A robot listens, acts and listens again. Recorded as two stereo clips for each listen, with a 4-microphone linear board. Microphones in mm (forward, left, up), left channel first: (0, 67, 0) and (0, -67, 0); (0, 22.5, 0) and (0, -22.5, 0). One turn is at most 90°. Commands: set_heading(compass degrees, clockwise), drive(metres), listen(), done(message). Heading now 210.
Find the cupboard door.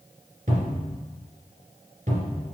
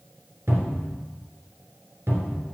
set_heading(300)
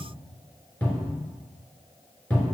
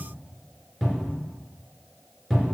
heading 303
set_heading(293)
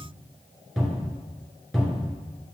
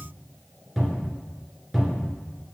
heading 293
done("Found it: a cupboard door, straight ahead, 2 to 4 m away.")